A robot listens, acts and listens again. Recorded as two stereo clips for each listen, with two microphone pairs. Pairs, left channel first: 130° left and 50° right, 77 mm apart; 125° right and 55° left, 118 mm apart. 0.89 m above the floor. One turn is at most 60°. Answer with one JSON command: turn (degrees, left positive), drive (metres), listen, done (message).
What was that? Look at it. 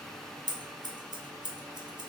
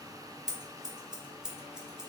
{"turn": -30}
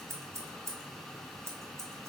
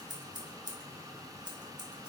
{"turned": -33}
{"done": "Facing the scissors."}